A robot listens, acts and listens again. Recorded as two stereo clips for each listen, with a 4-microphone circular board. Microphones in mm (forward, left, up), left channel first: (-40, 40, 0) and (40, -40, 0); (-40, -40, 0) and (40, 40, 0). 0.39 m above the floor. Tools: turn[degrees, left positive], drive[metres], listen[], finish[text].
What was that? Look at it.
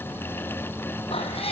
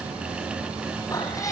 Thought: The cat meowing: 165° left.
Action: turn[165]
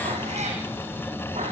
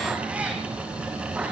Thought: The cat meowing is now 35° right.
Action: turn[-35]
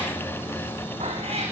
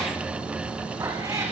Thought: The cat meowing is now 20° right.
Action: turn[-20]
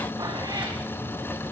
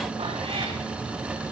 Action: listen[]
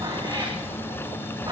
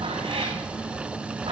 Thought: The cat meowing is now 10° left.
Action: turn[10]
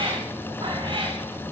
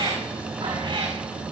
Action: finish[Facing the cat meowing.]